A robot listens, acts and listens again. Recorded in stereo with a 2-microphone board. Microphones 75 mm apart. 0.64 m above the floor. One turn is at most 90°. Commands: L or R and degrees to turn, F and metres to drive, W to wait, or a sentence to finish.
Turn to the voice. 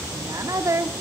R50
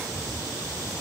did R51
W
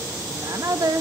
R65
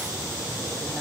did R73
W
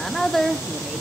Found it: a woman speaking, straight ahead.